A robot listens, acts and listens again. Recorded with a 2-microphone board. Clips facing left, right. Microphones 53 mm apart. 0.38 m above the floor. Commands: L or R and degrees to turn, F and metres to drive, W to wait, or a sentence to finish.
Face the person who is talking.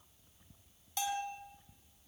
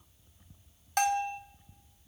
W
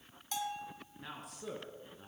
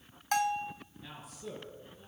L60
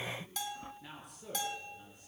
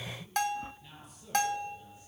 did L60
L55
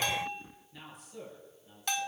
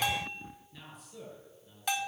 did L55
Facing the man speaking, over 4 m away.